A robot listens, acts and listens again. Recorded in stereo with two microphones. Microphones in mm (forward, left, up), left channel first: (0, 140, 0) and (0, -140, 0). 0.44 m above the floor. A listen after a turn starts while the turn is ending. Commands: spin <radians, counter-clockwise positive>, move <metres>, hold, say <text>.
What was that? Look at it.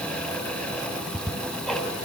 spin 0.52
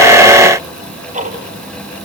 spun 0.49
spin -0.44
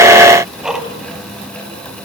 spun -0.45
say Facing the ticking.